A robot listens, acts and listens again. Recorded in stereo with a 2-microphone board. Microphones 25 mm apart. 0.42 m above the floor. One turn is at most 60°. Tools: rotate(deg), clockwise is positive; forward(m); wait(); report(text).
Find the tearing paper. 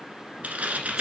rotate(60)
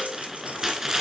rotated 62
rotate(20)
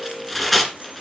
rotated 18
report("Found it: tearing paper, straight ahead.")